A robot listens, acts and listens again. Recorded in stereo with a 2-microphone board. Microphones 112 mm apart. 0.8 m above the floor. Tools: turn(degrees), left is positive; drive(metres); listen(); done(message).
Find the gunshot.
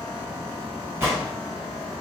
turn(degrees=-20)
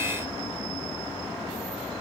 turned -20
listen()
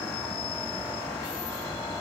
done("I heard a gunshot, but can't make it out now. It was about straight ahead or 140° right.")